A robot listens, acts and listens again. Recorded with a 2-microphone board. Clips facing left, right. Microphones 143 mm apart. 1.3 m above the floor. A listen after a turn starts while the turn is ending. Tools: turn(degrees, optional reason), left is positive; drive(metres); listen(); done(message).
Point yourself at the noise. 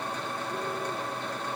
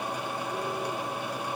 listen()
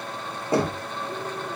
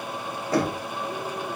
turn(degrees=25, reason="The knocking: about 25° left or 155° left.")
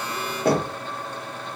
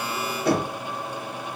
turn(degrees=130, reason="So it is at 130° left.")
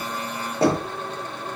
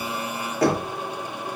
turn(degrees=25, reason="The knocking is now 25° left.")
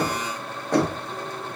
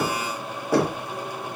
done("Found it: knocking, straight ahead, under 1 m away.")